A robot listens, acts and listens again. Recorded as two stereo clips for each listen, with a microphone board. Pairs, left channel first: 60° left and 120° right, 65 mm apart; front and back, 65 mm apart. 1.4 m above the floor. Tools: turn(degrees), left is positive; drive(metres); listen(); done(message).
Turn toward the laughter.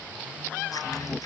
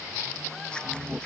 turn(degrees=100)
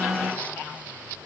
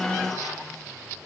listen()
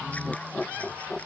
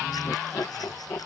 turn(degrees=-15)
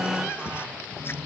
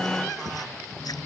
turn(degrees=-20)
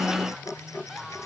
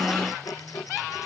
turn(degrees=-15)
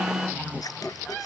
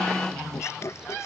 done("Found it: laughter, straight ahead.")